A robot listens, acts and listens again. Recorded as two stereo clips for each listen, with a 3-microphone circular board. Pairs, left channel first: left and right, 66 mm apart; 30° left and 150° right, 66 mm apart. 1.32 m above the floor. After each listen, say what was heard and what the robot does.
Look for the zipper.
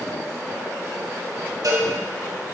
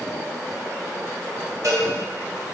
Keep listening.
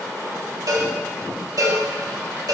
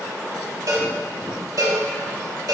Keep listening.
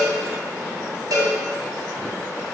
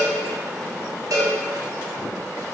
I can't make out a zipper to turn to.